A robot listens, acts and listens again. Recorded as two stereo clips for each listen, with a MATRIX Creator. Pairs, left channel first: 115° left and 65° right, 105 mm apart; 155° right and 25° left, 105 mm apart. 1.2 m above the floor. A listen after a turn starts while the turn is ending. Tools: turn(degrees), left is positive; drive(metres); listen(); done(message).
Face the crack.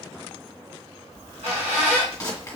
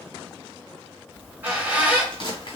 turn(degrees=175)
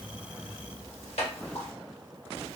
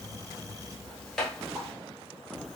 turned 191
turn(degrees=-20)
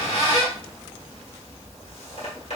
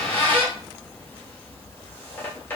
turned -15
done("I heard a crack from this way, but can't make it out now.")